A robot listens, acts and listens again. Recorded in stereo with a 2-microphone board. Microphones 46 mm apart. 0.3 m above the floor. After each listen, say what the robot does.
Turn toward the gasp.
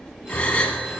Turn 25° left.
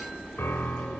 Keep listening.
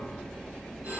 I heard a gasp, but can't make it out now. It was about straight ahead or 130° left.